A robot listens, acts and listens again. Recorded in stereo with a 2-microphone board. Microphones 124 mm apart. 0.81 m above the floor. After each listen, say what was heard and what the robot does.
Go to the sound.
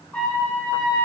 Turn 30° left.
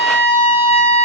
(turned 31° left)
So it is at 135° left. Turn 135° left.
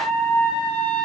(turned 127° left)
Drive 1.0 m forward.
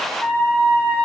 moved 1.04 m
Drive 1.0 m forward.
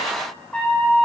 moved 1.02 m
The trumpet is now 10° left. Turn 10° left.
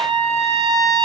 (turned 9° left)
Drive 1.0 m forward.
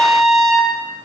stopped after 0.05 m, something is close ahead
Arrived at the trumpet, straight ahead.